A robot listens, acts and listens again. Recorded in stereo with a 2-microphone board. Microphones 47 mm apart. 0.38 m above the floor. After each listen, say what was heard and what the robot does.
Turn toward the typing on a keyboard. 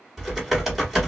Turn 30° right.
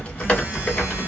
So it is at 30° left. Turn 30° left.
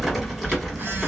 Facing the typing on a keyboard, 1 to 2 m away.